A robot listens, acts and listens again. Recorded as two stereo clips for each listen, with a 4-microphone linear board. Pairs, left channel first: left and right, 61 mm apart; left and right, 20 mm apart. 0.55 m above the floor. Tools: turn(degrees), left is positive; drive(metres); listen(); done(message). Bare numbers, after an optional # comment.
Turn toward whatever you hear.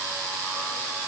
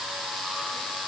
listen()
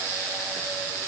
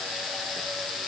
listen()
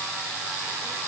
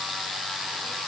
done("I can't make out anything.")